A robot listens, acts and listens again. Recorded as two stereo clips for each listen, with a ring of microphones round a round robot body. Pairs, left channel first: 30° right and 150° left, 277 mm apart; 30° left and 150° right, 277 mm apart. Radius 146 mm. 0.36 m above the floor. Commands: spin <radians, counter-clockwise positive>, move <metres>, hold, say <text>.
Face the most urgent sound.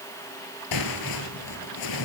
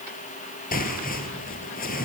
hold
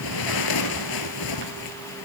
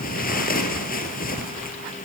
hold
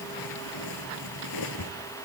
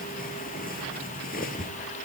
say I can't make out anything urgent to turn to.